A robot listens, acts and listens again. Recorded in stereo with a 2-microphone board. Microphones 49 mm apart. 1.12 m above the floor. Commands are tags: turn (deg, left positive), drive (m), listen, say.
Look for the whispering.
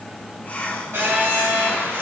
<turn deg="30"/>
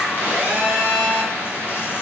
<listen/>
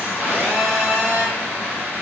<listen/>
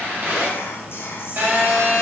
<say>I heard whispering, but can't make it out now. It was about straight ahead or 120° left.</say>